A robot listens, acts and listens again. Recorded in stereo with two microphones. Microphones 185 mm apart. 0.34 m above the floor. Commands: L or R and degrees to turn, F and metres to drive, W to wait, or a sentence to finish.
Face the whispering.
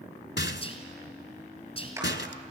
L30
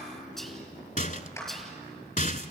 Facing the whispering.